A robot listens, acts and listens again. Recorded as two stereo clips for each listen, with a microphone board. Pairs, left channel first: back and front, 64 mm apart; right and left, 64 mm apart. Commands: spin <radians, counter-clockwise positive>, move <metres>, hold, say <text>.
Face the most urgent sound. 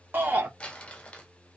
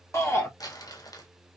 spin -0.96
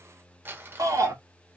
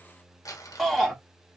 say Found it: a shout, straight ahead.